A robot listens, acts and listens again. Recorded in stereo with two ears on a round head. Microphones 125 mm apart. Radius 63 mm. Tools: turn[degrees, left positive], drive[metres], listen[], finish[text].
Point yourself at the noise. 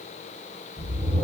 Thought: The whoosh: about 40° left or 140° left.
Action: turn[40]
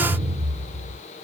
Action: finish[Facing the whoosh, 1 to 2 m away.]